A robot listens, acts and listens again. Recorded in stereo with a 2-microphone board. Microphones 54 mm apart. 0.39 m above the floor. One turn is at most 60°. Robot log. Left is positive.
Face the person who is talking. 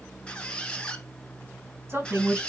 note: The woman speaking: about 50° right or 130° right.
cmd yaw -50
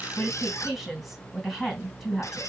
end: Found it: a woman speaking, straight ahead.